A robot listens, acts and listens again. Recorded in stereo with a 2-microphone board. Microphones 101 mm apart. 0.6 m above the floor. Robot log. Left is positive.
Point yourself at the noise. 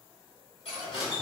cmd yaw +90
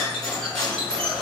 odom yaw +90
end: Found it: cutlery clinking, straight ahead.